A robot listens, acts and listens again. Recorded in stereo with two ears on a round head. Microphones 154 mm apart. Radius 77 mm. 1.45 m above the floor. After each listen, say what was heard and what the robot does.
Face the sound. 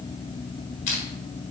The crushing: about 45° left or 135° left. Turn 45° left.
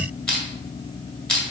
Facing the crushing.